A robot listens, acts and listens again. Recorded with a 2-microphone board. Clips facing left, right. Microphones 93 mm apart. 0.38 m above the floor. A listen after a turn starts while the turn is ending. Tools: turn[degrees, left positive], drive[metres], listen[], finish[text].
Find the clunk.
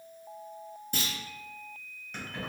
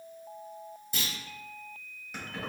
Thought: The clunk: about 60° left or 120° left.
Action: turn[60]
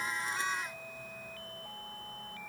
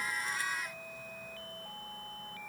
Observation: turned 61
Action: listen[]
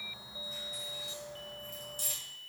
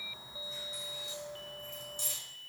Action: finish[I heard a clunk, but can't make it out now. It was about 5° right or 60° left.]